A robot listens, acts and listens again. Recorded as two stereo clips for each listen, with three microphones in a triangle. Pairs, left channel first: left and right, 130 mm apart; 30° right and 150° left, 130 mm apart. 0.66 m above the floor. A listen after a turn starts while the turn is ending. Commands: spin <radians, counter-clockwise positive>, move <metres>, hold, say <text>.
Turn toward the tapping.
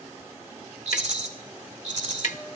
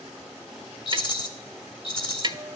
spin 1.75
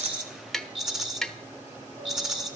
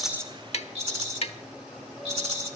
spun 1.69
say Found it: tapping, straight ahead, 1 to 2 m away.